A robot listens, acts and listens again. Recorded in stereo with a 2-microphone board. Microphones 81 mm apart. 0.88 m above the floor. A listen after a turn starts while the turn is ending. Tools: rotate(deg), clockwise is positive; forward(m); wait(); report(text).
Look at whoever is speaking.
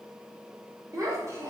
rotate(40)
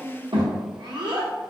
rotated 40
rotate(105)
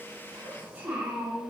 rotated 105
rotate(20)
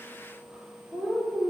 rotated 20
report("Facing the child speaking, 1 to 2 m away.")